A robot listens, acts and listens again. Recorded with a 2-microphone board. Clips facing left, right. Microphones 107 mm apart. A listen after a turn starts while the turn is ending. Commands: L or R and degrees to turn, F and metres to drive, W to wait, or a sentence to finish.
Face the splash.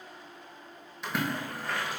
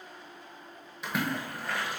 L30
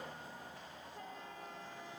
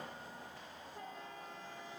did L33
W
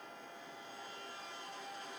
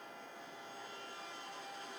I heard a splash, but can't make it out now. It was about 35° right or 150° left.